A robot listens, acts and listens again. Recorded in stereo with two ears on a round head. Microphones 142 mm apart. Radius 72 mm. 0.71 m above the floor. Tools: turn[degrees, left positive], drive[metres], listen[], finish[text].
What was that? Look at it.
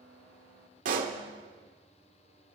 Thought: The pop: about 55° right or 125° right.
Action: turn[-55]
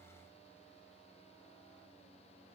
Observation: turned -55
Action: listen[]
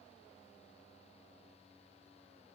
Action: finish[I heard a pop, but can't make it out now. It was about straight ahead or 70° right.]